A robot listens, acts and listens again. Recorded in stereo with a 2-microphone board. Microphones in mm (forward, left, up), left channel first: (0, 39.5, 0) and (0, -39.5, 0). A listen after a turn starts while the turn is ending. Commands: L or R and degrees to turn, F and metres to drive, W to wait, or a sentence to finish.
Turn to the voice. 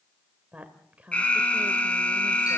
R20
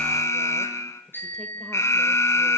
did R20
W
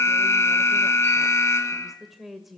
Found it: a woman speaking, straight ahead.